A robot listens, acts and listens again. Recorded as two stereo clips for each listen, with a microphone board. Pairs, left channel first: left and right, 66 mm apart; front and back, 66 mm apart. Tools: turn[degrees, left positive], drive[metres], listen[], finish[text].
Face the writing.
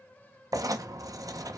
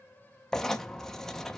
Thought: The writing: 85° right.
Action: turn[-85]
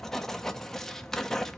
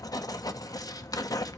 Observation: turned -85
Action: finish[Facing the writing, under 1 m away.]